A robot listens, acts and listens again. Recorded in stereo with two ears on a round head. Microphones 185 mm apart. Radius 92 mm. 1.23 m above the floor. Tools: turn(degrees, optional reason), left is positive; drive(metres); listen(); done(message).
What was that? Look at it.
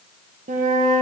turn(degrees=-40, reason="The flute: about 40° right or 140° right.")
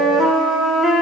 done("Found it: a flute, straight ahead, 1 to 2 m away.")